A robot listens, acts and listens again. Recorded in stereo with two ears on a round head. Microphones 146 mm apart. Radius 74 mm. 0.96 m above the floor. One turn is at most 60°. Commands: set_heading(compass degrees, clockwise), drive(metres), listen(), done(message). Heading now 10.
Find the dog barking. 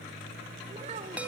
listen()
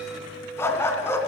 set_heading(355)
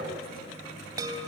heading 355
listen()
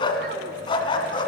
set_heading(295)
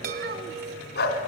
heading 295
set_heading(235)
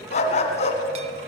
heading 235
set_heading(190)
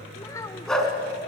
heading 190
done("Found it: a dog barking, straight ahead, 2 to 4 m away.")